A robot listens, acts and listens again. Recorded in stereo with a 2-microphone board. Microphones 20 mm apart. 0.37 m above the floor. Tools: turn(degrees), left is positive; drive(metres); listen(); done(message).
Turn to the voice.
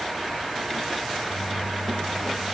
listen()
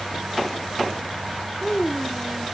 turn(degrees=65)
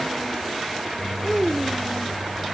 done("Facing the child speaking.")